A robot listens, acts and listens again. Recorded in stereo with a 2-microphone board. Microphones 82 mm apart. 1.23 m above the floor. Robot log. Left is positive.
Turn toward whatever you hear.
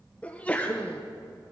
note: The sneeze: about 15° left or 165° left.
cmd yaw +15
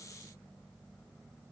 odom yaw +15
cmd idle
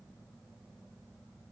end: I heard a sneeze, but can't make it out now. It was about straight ahead or 150° left.